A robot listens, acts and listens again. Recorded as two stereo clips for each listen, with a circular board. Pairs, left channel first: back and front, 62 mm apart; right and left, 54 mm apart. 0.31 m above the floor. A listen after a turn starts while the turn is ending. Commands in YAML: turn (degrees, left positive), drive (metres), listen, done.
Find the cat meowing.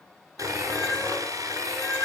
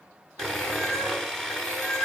turn: -95
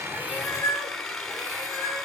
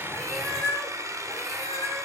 done: "Facing the cat meowing."